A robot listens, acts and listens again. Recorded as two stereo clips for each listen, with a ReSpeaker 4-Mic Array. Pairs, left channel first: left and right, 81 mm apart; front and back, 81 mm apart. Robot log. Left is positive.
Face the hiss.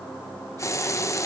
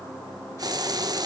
note: The hiss: 140° left.
cmd yaw +140
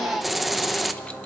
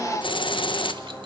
end: Found it: a hiss, straight ahead, 1 to 2 m away.